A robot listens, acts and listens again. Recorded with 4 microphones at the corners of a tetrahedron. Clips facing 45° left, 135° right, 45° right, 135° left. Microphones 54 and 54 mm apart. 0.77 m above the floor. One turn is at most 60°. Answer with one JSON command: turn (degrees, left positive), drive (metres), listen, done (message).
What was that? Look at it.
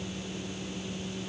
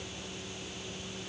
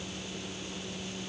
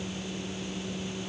{"listen": true}
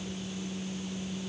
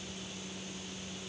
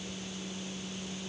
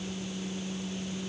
{"listen": true}
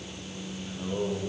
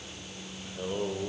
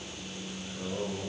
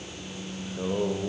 {"turn": 60}
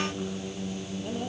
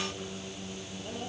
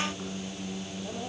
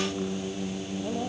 {"turn": 60}
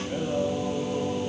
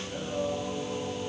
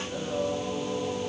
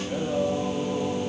{"turn": 60}
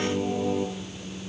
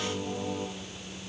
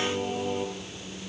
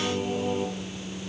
{"turn": 45}
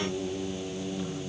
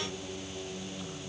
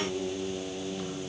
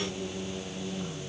{"done": "Facing the singing, over 4 m away."}